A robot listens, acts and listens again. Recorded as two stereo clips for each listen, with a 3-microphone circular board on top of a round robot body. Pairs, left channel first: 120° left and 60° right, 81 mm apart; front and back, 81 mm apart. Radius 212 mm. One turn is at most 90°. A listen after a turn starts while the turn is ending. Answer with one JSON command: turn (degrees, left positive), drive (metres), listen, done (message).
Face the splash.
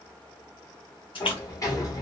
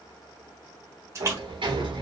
{"turn": 90}
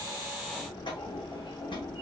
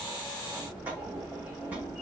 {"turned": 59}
{"turn": 65}
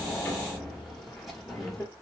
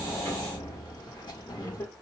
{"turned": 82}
{"turn": -15}
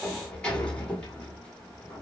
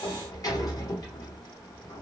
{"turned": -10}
{"done": "Facing where the splash came from. I can't hear it now."}